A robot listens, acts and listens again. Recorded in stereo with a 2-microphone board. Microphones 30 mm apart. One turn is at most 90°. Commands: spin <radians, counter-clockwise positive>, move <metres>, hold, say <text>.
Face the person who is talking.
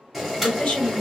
spin 0.96
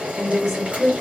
spin 0.26
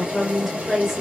say Facing the woman speaking.